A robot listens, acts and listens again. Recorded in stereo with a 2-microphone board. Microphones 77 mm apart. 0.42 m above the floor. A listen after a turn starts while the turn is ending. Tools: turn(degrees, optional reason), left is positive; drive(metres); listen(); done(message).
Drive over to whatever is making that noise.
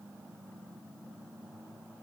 listen()
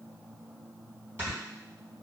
turn(degrees=-35, reason="The snoring: about 35° right or 145° right.")
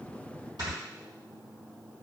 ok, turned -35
turn(degrees=-110, reason="So it is at 110° right.")
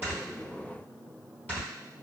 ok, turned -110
turn(degrees=25, reason="The snoring is now 25° left.")
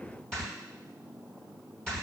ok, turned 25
turn(degrees=10, reason="The snoring is now 10° left.")
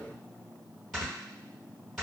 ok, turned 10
drive(metres=1.0)
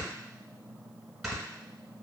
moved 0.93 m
drive(metres=1.0)
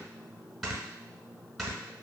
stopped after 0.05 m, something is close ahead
done("Arrived at the snoring, straight ahead.")